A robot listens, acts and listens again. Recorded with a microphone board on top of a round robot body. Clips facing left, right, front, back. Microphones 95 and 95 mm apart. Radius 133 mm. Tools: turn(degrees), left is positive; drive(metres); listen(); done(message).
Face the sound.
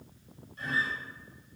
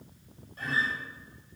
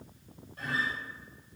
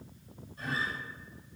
turn(degrees=-40)
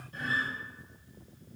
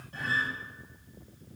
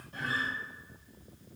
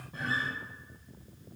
turn(degrees=-30)
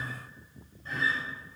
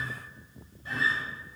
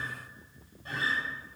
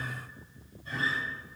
done("Found it: a guitar, straight ahead.")